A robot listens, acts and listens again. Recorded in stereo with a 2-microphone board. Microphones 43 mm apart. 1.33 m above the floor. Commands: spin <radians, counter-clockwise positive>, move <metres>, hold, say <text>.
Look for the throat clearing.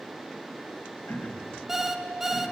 spin 0.87
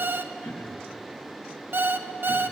spin 1.31
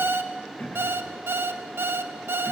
spin 0.61
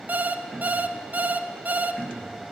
say Found it: throat clearing, straight ahead, 1 to 2 m away.